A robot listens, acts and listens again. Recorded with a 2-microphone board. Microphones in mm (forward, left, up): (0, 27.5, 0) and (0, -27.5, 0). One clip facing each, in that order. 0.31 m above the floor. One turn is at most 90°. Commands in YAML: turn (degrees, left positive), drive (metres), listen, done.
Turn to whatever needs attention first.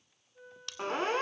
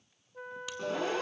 turn: 45
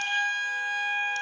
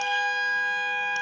turn: 10
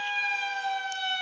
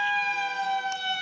done: "Facing the siren."